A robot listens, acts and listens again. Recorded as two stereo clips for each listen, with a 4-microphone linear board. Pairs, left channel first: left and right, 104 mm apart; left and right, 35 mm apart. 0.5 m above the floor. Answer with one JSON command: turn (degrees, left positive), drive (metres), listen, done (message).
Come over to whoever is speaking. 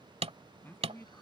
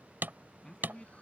{"turn": 20}
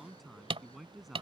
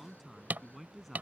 {"drive": 1.0}
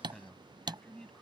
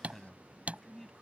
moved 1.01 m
{"turn": 10}
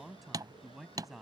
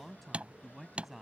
{"drive": 1.0}
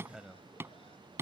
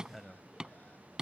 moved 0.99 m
{"drive": 1.0}
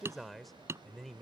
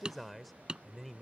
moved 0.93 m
{"drive": 1.0}
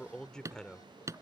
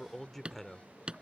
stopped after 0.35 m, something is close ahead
{"turn": 10}
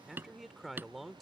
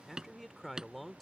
{"done": "I am next to the man speaking."}